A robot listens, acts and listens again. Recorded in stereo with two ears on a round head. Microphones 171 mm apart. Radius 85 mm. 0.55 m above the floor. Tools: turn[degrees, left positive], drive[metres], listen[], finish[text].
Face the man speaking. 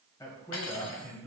Action: turn[30]
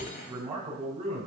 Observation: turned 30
Thought: So it is at 35° right.
Action: turn[-35]
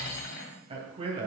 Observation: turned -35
Thought: The man speaking is now 35° right.
Action: turn[-35]
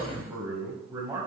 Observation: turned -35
Thought: The man speaking is now 15° right.
Action: turn[-15]
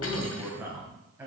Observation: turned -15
Thought: The man speaking is now 10° right.
Action: turn[-10]
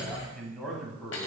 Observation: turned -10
Action: finish[Facing the man speaking.]